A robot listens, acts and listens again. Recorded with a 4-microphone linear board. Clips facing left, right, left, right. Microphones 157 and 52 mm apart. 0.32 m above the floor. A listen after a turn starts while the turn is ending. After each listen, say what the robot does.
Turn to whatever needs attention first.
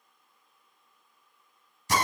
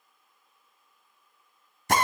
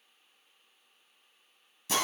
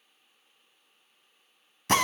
Keep listening.
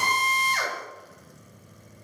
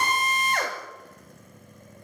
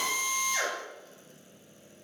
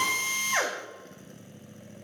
Keep listening.
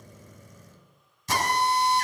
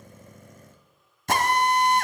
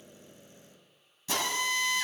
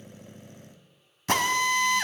I can't make out anything urgent to turn to.